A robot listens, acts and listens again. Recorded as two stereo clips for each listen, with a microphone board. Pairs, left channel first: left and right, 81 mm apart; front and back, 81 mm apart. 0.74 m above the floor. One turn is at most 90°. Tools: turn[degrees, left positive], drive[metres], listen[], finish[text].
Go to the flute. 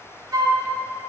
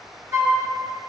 Thought: The flute: 130° right.
Action: turn[-90]
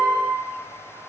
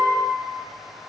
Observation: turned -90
Thought: Nothing new. It was at 40° right.
Action: turn[-40]
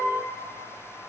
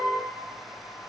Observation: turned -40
Action: listen[]
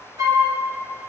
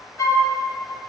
Thought: The flute is now 50° right.
Action: turn[-50]
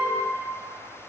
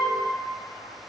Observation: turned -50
Action: listen[]
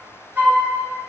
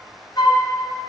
Thought: The flute is now 25° right.
Action: turn[-25]
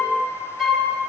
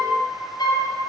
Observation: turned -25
Action: drive[1.0]
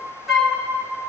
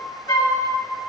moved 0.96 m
Action: drive[1.0]
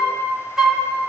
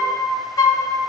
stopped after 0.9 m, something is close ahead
Thought: The flute is now 10° right.
Action: turn[-10]
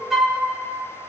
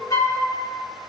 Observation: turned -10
Action: finish[I am next to the flute.]